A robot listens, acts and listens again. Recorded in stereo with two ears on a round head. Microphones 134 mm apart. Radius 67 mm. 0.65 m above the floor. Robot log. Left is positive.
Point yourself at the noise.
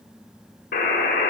note: The buzzer: about 60° left or 120° left.
cmd yaw +60
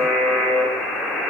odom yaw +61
end: Facing the buzzer, 2 to 4 m away.